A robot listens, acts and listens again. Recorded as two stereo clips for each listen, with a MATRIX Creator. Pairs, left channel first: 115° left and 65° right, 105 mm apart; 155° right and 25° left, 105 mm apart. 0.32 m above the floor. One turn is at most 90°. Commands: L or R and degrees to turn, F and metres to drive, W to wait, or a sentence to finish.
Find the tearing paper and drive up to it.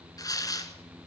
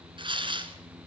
L60
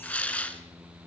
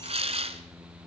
L35
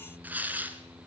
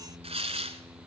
F1.0
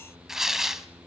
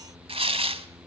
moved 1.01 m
L20
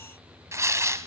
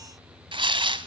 F1.0
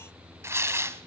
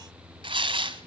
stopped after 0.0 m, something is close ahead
Arrived at the tearing paper, straight ahead.